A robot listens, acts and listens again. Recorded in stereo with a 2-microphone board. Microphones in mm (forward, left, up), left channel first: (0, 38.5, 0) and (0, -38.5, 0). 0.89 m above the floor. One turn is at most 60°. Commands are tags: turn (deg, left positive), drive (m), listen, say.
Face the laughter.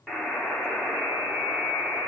<listen/>
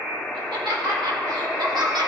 <turn deg="-60"/>
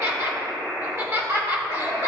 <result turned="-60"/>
<turn deg="-35"/>
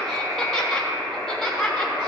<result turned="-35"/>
<say>Found it: laughter, straight ahead, 1 to 2 m away.</say>